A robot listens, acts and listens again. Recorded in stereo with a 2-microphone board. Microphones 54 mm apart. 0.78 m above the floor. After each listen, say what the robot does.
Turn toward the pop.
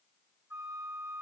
Keep listening.
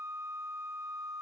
Keep listening.
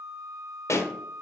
Turn 60° left.
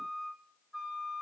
Keep listening.
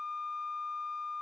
I heard a pop, but can't make it out now. It was about straight ahead or 60° left.